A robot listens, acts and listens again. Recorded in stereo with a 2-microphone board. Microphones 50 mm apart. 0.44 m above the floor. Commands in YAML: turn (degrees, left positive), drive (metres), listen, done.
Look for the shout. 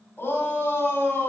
turn: 45
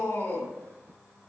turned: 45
turn: 85
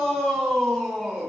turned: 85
turn: 15
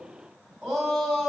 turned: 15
done: "Facing the shout, 2 to 4 m away."